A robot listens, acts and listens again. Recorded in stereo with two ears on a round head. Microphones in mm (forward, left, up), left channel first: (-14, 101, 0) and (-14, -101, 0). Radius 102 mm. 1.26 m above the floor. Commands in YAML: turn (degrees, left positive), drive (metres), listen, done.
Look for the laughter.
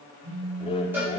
turn: 25
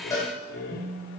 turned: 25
turn: 130
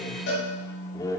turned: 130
turn: 15
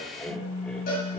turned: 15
listen: true
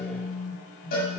listen: true
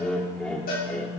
done: "Found it: laughter, straight ahead."